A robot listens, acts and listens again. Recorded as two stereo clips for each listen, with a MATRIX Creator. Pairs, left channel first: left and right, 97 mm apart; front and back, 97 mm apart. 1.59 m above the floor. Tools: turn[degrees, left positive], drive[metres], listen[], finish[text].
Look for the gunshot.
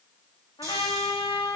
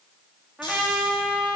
Action: listen[]
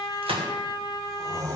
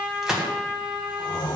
Thought: The gunshot: 95° right.
Action: turn[-95]
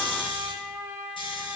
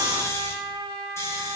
Action: finish[Facing where the gunshot came from. I can't hear it now.]